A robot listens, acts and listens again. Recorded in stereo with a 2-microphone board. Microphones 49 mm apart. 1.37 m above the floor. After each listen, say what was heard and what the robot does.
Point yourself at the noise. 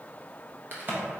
The crack: about 45° right or 135° right. Turn 45° right.
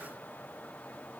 Keep listening.
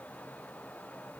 I heard a crack, but can't make it out now. It was about straight ahead or 90° right.